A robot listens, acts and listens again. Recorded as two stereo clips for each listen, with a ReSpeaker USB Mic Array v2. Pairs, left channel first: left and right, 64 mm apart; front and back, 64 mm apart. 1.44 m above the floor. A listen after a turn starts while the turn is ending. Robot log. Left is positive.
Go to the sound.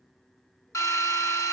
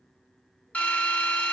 note: The drill: 65° left.
cmd yaw +65
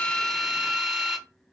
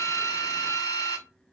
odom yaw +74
note: The drill is now 10° right.
cmd yaw -10
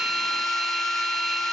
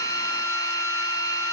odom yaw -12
cmd fwd 1.0
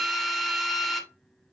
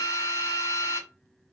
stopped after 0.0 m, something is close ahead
end: Something is in my way. I am facing the drill but have not reached it.